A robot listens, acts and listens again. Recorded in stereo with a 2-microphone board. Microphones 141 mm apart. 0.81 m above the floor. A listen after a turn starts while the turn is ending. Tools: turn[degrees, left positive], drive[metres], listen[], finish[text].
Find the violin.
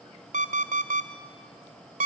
Action: listen[]
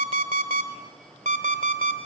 Action: listen[]
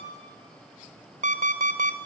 Action: finish[I can't make out a violin to turn to.]